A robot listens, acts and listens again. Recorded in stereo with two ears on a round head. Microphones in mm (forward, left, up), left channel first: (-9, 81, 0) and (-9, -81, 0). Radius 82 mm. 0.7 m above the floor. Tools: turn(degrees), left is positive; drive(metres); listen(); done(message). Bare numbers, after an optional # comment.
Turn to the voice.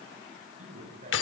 # The man speaking: about 45° right or 135° right.
turn(-45)
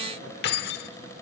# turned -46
listen()
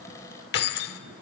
listen()
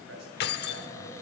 # So it is at 105° right.
turn(-105)
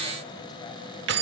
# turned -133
# Nothing new. It was at 30° left.
turn(30)
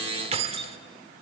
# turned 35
listen()
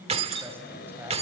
# The man speaking is now 15° right.
turn(-15)
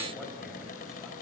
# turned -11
listen()
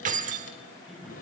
done("Found it: a man speaking, straight ahead, over 4 m away.")